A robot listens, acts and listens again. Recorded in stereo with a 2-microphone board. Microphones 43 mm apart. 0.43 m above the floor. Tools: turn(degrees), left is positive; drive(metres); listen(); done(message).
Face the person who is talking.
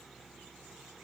listen()
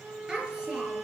turn(degrees=-15)
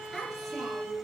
done("Found it: a child speaking, straight ahead.")